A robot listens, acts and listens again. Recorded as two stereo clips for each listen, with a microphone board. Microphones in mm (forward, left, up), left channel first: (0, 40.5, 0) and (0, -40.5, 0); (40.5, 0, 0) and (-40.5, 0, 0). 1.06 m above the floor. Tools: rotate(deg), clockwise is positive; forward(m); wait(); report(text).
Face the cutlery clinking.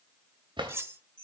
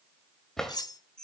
rotate(35)
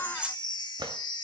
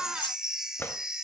rotate(15)
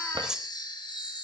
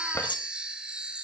rotate(10)
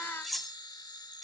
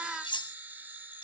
report("Facing the cutlery clinking, under 1 m away.")